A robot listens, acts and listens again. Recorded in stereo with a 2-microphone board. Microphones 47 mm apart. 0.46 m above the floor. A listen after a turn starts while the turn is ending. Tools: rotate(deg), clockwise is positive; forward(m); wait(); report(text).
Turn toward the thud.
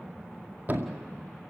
rotate(40)
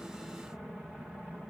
wait()
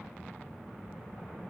report("I heard a thud, but can't make it out now. It was about straight ahead or 100° right.")